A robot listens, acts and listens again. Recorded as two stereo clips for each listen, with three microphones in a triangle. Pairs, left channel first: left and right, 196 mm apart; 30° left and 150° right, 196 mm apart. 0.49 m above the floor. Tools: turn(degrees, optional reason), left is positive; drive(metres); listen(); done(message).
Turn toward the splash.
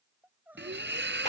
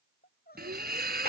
turn(degrees=-110, reason="The splash: 110° right.")
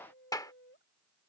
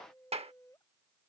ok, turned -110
done("Facing where the splash came from. I can't hear it now.")